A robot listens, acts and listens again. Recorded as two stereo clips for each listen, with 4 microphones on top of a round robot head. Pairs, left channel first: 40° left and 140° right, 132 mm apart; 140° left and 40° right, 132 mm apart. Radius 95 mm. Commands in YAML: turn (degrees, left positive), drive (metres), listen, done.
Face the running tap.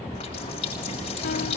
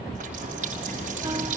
turn: -10
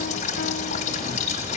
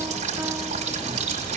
done: "Found it: a running tap, straight ahead."